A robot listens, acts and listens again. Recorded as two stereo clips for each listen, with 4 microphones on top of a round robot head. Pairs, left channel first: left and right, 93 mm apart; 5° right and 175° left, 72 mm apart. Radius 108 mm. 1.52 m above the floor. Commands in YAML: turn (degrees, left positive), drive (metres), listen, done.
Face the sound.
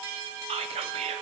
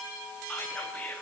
turn: -80
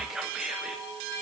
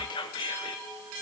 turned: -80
done: "Facing the whispering, under 1 m away."